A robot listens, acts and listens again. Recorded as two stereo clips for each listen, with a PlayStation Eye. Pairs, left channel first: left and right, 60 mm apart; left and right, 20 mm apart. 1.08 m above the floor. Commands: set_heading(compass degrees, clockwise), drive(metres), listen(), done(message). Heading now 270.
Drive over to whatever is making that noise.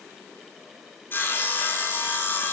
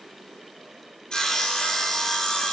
set_heading(235)
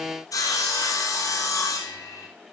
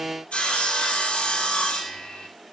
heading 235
set_heading(125)
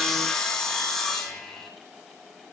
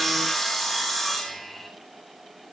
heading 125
set_heading(115)
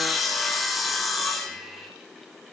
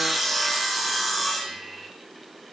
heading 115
drive(1.0)
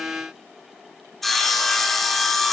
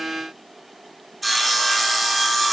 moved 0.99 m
drive(1.0)
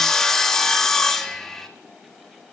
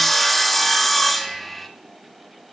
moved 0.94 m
set_heading(105)
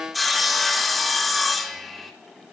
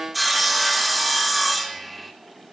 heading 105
drive(1.0)
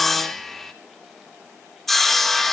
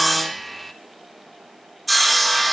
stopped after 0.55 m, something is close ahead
done("Arrived at the sawing, straight ahead.")